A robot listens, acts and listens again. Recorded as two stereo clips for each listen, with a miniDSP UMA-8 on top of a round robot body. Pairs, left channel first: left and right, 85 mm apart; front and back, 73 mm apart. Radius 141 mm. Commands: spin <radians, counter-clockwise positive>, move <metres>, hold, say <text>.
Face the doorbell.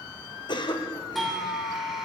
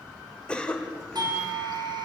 spin 3.14
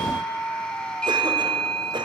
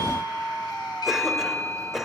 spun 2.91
spin 0.17
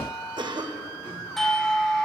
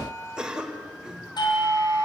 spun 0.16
say Facing the doorbell, over 4 m away.